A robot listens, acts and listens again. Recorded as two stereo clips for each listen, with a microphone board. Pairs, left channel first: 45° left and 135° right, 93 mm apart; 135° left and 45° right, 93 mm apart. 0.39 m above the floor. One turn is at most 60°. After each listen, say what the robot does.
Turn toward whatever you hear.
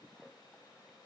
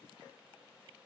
Keep listening.
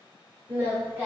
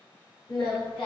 Turn 60° left.
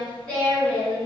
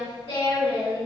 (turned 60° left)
Turn 60° left.
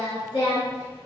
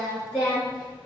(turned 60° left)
Turn 60° left.
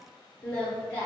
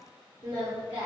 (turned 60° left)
Turn 20° right.
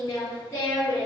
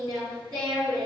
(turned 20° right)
Found it: singing, straight ahead.